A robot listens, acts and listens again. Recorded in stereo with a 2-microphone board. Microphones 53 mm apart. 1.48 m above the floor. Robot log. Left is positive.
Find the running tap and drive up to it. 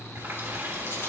note: The running tap: about 45° right or 135° right.
cmd yaw -45
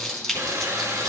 note: So it is at 90° right.
cmd yaw -90
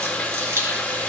note: The running tap is now 30° left.
cmd yaw +30
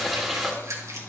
cmd fwd 1.0
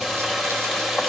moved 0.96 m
cmd fwd 1.0
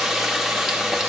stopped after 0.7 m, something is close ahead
note: The running tap is now 10° right.
cmd yaw -10
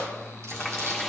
end: Arrived at the running tap, straight ahead.